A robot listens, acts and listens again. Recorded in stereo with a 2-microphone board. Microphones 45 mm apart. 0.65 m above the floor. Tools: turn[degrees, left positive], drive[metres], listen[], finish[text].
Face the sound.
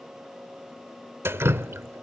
Thought: The dripping: about 70° right or 110° right.
Action: turn[-70]
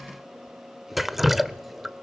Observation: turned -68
Action: finish[Found it: dripping, straight ahead.]